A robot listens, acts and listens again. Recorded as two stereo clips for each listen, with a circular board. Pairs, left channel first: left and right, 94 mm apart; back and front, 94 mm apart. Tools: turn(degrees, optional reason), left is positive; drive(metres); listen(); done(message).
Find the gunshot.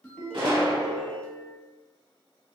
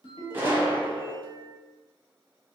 turn(degrees=-65, reason="The gunshot: 65° right.")
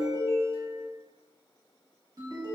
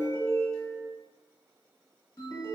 done("I heard a gunshot from this way, but can't make it out now.")